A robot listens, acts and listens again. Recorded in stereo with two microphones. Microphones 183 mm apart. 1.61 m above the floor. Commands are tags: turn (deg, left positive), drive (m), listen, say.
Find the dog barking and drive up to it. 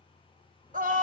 <turn deg="-40"/>
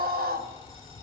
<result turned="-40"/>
<drive m="1.0"/>
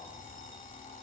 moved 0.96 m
<drive m="1.0"/>
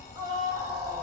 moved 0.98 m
<turn deg="10"/>
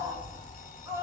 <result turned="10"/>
<drive m="1.0"/>
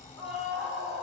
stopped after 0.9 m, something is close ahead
<turn deg="-10"/>
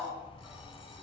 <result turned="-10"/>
<say>Arrived at the dog barking, straight ahead.</say>